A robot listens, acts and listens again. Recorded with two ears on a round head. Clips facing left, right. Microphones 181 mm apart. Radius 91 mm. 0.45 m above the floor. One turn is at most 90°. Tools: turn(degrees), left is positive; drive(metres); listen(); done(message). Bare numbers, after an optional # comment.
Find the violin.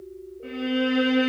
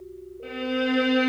# The violin: about 45° right or 135° right.
turn(-45)
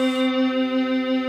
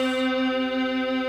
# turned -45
done("Found it: a violin, straight ahead.")